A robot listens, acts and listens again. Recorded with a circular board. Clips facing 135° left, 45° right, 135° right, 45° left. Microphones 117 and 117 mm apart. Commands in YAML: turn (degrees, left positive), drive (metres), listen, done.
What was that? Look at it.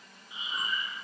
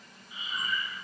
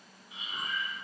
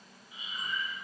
turn: -155
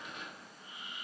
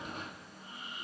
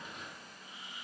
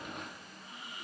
done: "Found it: breathing, straight ahead, 1 to 2 m away."